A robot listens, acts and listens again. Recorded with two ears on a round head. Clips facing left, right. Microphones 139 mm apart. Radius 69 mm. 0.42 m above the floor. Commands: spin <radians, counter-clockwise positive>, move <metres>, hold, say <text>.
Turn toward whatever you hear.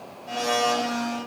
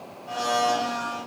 spin 0.52
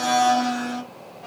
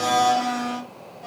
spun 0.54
spin -0.35
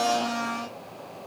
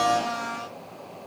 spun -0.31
say Facing the blender.